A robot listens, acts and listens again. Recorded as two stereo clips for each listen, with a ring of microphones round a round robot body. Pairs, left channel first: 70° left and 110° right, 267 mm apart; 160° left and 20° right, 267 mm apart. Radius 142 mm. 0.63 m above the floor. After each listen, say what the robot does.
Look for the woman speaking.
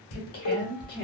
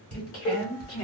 Turn 125° left.
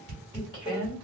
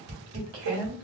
Found it: a woman speaking, straight ahead.